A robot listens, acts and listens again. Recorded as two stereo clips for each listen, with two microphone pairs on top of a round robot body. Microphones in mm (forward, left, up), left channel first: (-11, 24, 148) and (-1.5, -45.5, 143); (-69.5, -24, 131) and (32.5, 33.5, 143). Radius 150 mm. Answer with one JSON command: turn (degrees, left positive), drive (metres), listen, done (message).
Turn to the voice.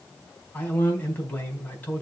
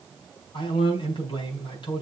{"turn": 165}
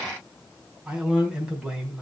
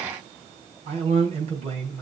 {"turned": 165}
{"done": "Found it: a man speaking, straight ahead."}